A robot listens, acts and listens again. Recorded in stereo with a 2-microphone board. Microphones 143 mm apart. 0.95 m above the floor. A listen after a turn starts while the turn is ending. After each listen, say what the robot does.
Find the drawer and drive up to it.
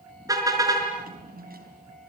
Turn 90° right.
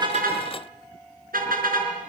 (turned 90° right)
Keep listening.
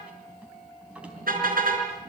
Turn 10° right.
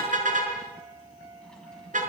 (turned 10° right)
Keep listening.
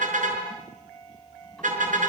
Keep listening.
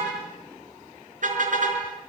Facing where the drawer came from. I can't hear it now. I did not reach it.